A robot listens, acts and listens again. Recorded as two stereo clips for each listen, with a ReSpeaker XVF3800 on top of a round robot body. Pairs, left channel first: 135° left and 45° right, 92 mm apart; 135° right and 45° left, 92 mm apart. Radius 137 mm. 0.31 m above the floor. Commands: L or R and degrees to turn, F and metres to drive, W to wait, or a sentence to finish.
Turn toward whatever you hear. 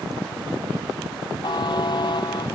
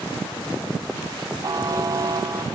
L95
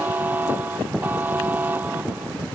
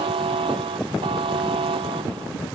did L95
L25
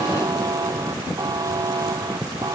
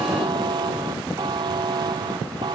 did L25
Facing the buzzer.